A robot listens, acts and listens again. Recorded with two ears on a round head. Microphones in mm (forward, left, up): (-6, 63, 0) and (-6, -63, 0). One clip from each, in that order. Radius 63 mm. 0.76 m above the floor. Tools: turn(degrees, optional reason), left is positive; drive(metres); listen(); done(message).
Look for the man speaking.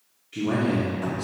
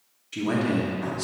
turn(degrees=-65, reason="The man speaking: about 65° right or 115° right.")
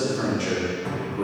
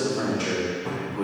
turn(degrees=-10, reason="So it is at 10° right.")
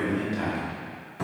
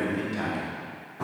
done("Found it: a man speaking, straight ahead.")